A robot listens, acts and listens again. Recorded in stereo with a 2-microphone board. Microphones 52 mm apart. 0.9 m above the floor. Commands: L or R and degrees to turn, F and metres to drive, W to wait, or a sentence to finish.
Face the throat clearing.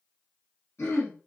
L60
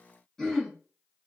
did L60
L10
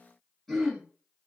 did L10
Facing the throat clearing, 1 to 2 m away.